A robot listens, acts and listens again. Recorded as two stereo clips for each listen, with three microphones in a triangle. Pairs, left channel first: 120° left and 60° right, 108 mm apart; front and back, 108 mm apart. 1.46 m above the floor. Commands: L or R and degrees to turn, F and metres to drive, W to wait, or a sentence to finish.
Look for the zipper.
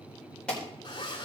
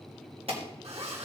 L165
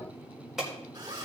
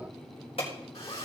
R10
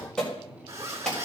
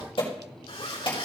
Found it: a zipper, straight ahead, 2 to 4 m away.